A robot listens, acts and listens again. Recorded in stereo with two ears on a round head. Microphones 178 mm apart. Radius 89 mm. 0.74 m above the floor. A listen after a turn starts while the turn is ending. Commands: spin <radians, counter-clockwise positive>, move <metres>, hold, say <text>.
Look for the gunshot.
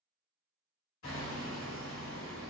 hold
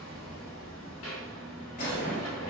spin 0.79
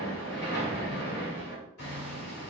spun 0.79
hold
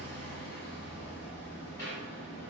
say I heard a gunshot, but can't make it out now. It was about straight ahead or 90° left.